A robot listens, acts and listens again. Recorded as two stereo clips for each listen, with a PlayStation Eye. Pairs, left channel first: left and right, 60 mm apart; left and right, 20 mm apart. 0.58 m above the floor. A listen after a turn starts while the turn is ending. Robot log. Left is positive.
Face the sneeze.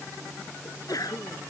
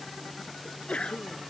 cmd yaw +90
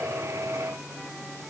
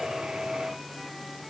end: I heard a sneeze from this way, but can't make it out now.